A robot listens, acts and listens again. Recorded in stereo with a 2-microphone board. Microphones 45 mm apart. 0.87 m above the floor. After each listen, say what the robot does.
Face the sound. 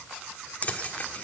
Turn 30° left.
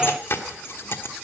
Turn 120° left.
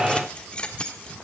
Turn 25° left.
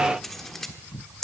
Facing the keys jangling, 1 to 2 m away.